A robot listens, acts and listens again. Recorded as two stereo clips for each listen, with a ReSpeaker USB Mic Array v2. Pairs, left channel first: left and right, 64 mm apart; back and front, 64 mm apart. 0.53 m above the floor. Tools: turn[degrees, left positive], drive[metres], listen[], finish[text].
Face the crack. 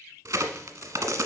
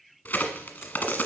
Thought: The crack: 110° right.
Action: turn[-110]
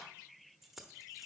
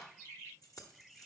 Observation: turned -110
Action: finish[I heard a crack from this way, but can't make it out now.]